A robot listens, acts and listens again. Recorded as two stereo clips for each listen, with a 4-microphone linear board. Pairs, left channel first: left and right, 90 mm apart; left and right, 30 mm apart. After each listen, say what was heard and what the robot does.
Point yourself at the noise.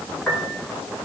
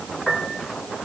The piano: about 15° left or 165° left. Turn 15° left.
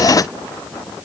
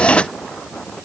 Keep listening.
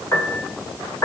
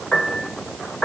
So it is at 150° left. Turn 150° left.
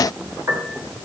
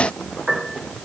The piano is now 30° right. Turn 30° right.
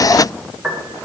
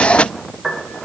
The piano is now 10° right. Turn 10° right.
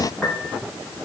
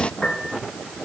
Found it: a piano, straight ahead, 2 to 4 m away.